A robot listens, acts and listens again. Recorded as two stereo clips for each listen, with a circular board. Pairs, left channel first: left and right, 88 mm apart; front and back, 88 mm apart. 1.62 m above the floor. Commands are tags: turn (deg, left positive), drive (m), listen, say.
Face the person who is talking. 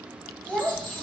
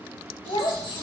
<say>Facing the child speaking.</say>